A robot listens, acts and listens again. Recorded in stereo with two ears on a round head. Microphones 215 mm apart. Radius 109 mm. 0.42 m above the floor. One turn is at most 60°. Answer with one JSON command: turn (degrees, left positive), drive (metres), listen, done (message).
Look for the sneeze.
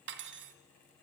{"listen": true}
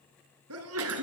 {"turn": -60}
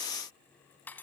{"listen": true}
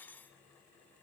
{"done": "I heard a sneeze, but can't make it out now. It was about 10° right or 50° right."}